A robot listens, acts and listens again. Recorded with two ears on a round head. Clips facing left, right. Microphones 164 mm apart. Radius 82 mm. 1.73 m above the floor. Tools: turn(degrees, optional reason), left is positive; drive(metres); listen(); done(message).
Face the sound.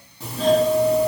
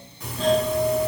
turn(degrees=30, reason="The doorbell: about 30° left or 150° left.")
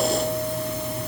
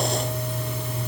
turn(degrees=120, reason="So it is at 120° left.")
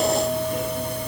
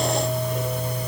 turn(degrees=45, reason="The doorbell is now 45° left.")
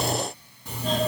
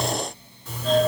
turn(degrees=15, reason="The doorbell is now 15° left.")
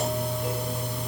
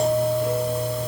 done("Found it: a doorbell, straight ahead, 2 to 4 m away.")